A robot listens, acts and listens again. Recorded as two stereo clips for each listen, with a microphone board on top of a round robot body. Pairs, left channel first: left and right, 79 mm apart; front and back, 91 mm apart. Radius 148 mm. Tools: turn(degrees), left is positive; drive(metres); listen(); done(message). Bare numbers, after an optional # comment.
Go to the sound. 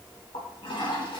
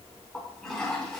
# The toilet flushing: 85° left.
turn(85)
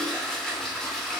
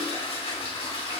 drive(1.0)
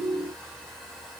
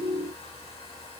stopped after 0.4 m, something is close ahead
listen()
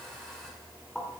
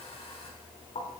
done("Something is in my way. I am facing the toilet flushing but have not reached it.")